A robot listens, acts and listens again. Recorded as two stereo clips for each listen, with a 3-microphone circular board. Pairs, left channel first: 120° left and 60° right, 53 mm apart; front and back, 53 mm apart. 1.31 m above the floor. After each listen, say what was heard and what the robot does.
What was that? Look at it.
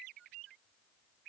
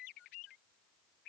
Keep listening.
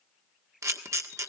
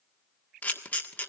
The camera shutter: 60° right. Turn 60° right.
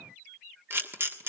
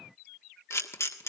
The camera shutter is now 20° right. Turn 20° right.
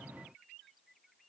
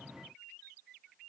Keep listening.
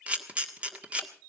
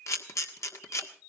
Facing the camera shutter, 1 to 2 m away.